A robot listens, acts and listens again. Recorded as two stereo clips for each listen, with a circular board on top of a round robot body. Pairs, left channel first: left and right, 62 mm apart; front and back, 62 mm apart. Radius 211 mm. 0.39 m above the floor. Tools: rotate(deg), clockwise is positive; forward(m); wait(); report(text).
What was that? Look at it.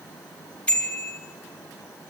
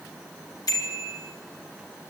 rotate(-20)
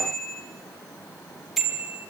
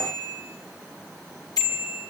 report("Found it: a bicycle bell, straight ahead, over 4 m away.")